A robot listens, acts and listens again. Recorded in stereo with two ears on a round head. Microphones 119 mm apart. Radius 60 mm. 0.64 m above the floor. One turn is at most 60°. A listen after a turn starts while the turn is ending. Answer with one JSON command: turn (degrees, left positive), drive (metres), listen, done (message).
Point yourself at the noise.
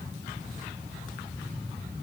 {"listen": true}
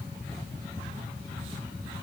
{"listen": true}
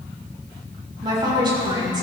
{"turn": -35}
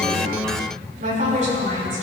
{"turn": -60}
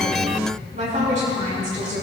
{"turn": -55}
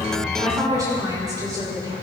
{"turn": -25}
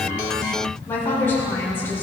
{"turn": 15}
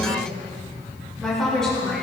{"done": "Found it: a woman speaking, straight ahead, over 4 m away."}